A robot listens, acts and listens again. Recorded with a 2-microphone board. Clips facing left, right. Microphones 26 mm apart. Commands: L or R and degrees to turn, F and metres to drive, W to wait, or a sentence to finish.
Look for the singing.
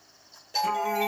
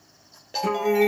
R70
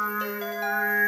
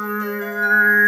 R45
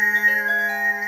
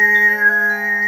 R25
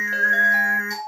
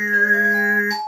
R15
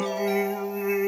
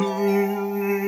R10
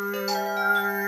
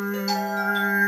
Facing the singing.